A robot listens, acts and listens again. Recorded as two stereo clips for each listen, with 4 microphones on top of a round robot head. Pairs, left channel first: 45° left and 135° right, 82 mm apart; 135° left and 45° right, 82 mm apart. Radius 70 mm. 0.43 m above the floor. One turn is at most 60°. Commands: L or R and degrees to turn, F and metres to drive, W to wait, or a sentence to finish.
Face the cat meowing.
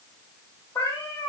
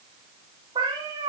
R15
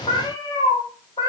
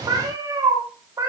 L10
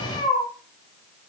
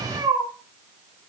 Found it: a cat meowing, straight ahead.